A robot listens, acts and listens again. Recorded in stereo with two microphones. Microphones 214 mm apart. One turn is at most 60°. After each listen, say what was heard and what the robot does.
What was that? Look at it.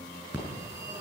The phone ringing: about 20° right or 160° right. Turn 20° right.
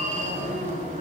So it is at 145° right. Turn 60° right.
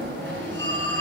The phone ringing is now 60° right. Turn 60° right.
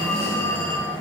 The phone ringing is now 10° left. Turn 10° left.
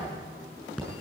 Facing the phone ringing, over 4 m away.